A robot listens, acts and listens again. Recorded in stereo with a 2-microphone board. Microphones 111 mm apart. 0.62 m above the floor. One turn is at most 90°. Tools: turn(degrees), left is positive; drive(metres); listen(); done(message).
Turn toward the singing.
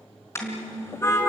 turn(degrees=-55)
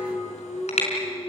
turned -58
turn(degrees=10)
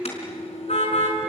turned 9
done("Found it: singing, straight ahead, 2 to 4 m away.")